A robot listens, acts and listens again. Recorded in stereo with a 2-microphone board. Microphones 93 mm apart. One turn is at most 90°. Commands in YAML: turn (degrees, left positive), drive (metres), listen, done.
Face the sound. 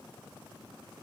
listen: true
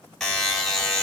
turn: 30
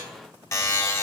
turn: 90
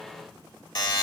turn: 55
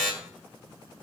done: "Facing the buzzer, 2 to 4 m away."